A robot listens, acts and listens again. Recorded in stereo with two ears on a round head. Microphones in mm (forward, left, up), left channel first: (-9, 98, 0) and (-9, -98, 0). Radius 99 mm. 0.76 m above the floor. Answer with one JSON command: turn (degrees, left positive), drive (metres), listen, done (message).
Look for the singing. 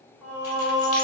{"turn": -30}
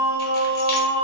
{"turn": -140}
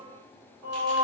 {"turn": -30}
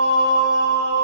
{"turn": 15}
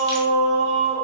{"done": "Facing the singing, 1 to 2 m away."}